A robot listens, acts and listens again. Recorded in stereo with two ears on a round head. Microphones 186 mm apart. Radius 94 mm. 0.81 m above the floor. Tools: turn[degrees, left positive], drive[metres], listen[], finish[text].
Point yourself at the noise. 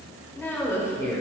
Thought: The woman speaking: about 20° left or 160° left.
Action: turn[20]
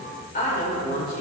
Thought: So it is at 130° left.
Action: turn[130]
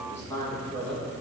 Action: finish[Found it: a woman speaking, straight ahead.]